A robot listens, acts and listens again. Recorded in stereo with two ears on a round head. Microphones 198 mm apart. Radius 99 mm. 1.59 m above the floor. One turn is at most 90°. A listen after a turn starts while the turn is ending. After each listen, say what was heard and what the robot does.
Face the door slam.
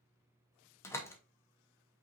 Turn 30° left.
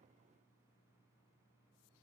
Keep listening.
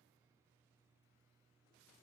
I heard a door slam, but can't make it out now. It was about 20° right or 140° left.